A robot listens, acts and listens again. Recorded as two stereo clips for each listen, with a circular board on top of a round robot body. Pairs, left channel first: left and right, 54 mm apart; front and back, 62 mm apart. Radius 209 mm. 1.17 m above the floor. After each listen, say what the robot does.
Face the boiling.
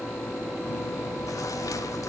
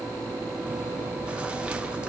Keep listening.
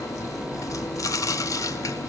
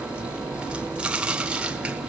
Keep listening.
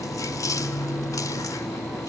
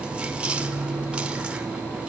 I can't make out boiling, only chewing.